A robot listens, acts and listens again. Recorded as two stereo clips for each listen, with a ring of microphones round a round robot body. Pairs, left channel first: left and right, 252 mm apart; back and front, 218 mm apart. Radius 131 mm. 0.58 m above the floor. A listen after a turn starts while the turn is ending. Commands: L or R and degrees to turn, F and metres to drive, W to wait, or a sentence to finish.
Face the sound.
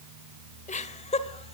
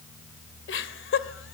L155
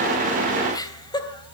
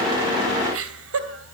L15
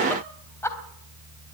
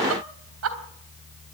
L10
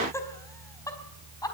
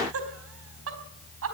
L15
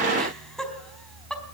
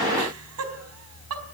Facing the laughter.